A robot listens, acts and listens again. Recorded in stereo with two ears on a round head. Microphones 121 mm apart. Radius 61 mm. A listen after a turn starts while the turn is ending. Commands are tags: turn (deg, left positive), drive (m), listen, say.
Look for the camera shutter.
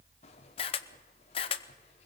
<turn deg="40"/>
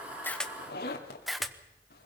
<say>Found it: a camera shutter, straight ahead, under 1 m away.</say>